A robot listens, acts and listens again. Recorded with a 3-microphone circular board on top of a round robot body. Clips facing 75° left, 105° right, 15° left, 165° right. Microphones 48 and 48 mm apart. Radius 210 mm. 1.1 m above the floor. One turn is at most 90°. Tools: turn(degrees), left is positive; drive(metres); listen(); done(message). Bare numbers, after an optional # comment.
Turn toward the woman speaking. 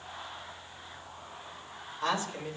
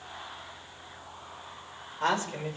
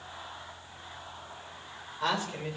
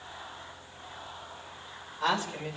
# The woman speaking: 75° right.
turn(-75)
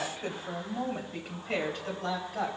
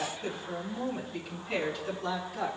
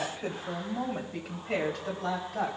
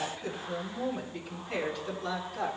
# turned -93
# The woman speaking is now 30° left.
turn(30)
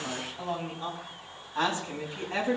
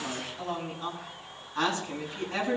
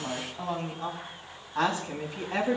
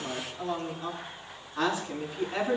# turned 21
# The woman speaking is now 10° left.
turn(10)
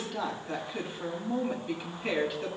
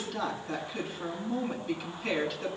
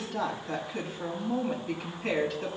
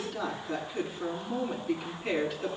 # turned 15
done("Facing the woman speaking, over 4 m away.")